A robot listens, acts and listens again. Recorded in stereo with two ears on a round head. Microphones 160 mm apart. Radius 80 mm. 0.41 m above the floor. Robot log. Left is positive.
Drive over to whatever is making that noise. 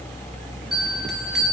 cmd yaw +30
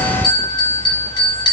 note: So it is at 155° left.
cmd yaw +155
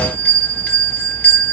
note: The bell is now 10° left.
cmd yaw +10
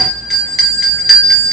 cmd fwd 1.0
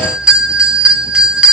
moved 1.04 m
cmd fwd 1.0
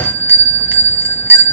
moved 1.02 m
note: The bell is now 15° right.
cmd yaw -15
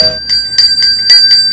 cmd fwd 1.0
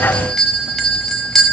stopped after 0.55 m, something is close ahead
end: Arrived at the bell, straight ahead.